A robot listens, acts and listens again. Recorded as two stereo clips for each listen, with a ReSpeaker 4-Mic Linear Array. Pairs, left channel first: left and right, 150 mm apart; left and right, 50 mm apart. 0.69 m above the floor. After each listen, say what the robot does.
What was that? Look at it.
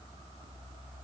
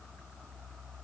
Keep listening.
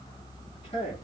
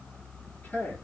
Turn 40° left.
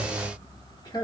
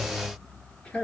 Turn 30° left.
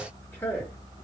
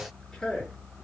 Turn 20° left.
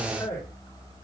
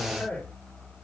Turn 20° left.
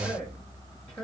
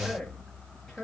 Turn 15° left.
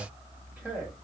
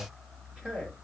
Facing the man speaking.